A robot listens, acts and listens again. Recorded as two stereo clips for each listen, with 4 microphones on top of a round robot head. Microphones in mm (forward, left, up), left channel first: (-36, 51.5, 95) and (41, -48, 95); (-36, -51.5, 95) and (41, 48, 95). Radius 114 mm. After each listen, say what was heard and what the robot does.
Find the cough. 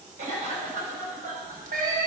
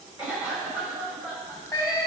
The cough: 25° right. Turn 25° right.
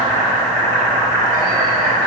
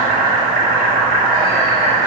Keep listening.
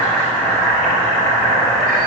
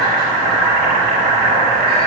Keep listening.
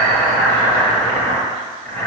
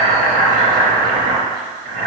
Facing where the cough came from. I can't hear it now.